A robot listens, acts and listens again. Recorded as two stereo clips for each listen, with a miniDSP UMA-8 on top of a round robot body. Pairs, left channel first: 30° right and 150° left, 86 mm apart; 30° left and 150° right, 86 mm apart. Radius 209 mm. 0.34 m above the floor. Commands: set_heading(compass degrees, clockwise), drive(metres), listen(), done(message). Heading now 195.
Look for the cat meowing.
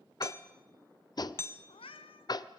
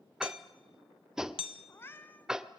set_heading(235)
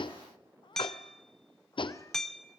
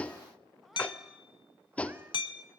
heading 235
listen()
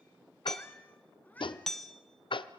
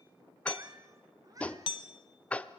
set_heading(335)
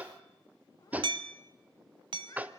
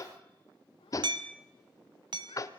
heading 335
listen()
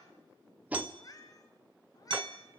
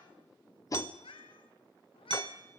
set_heading(315)
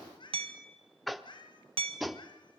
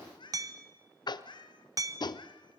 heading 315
done("Found it: a cat meowing, straight ahead, 2 to 4 m away.")